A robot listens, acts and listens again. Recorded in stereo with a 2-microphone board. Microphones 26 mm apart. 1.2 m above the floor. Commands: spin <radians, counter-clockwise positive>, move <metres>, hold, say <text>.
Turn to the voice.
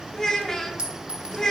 spin 0.35
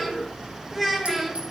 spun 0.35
say Found it: a child speaking, straight ahead, 1 to 2 m away.